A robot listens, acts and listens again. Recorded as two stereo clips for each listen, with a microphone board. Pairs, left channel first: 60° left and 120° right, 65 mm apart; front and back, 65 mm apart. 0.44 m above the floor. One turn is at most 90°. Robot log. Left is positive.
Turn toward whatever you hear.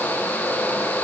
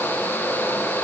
cmd idle
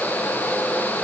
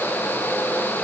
cmd idle
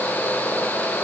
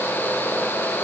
end: I can't make out anything to turn to.